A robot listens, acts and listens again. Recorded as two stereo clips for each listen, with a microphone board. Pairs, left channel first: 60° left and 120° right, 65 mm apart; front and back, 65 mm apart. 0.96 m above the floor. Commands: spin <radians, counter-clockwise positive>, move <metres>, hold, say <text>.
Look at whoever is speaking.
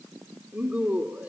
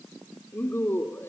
spin -0.87
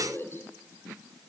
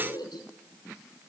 say Facing the woman speaking.